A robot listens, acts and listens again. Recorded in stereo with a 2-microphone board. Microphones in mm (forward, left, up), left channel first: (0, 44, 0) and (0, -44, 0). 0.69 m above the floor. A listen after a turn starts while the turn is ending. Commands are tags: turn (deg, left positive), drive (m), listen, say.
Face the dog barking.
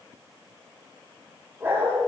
<turn deg="-25"/>
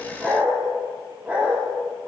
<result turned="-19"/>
<turn deg="-15"/>
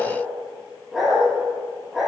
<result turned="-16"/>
<turn deg="-30"/>
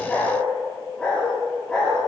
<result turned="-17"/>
<turn deg="10"/>
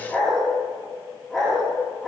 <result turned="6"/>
<say>Facing the dog barking.</say>